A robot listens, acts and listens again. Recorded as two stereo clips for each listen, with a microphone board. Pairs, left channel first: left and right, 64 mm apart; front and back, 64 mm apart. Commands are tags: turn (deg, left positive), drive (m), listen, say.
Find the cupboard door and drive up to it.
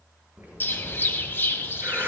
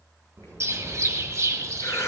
<turn deg="-155"/>
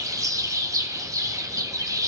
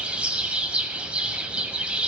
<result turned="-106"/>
<turn deg="-45"/>
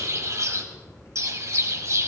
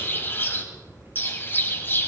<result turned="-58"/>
<turn deg="10"/>
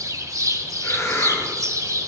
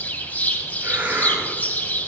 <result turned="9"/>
<say>I heard a cupboard door from this way, but can't make it out now. I did not reach it.</say>